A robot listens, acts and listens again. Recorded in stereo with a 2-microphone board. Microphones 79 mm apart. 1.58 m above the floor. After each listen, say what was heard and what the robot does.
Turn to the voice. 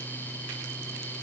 Keep listening.
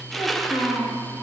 The child speaking: about 55° left or 125° left. Turn 55° left.
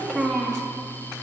Facing the child speaking.